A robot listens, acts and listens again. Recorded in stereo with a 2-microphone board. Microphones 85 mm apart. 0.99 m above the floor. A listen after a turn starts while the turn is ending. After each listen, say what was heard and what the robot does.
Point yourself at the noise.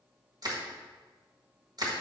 The crushing: about 50° right or 130° right. Turn 50° right.
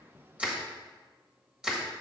So it is at 10° right. Turn 10° right.
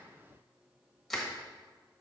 Found it: crushing, straight ahead.